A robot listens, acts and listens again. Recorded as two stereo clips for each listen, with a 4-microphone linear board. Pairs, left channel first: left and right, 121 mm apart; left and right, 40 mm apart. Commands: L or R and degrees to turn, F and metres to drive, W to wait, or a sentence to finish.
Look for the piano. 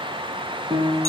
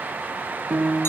R35
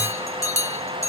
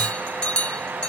W
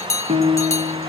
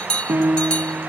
R105
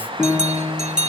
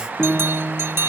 Found it: a piano, straight ahead.